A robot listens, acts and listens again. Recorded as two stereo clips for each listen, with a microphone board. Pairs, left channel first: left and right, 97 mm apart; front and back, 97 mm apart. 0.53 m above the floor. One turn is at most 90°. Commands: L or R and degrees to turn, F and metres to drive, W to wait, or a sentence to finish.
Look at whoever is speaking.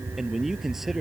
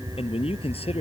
Found it: a man speaking, straight ahead.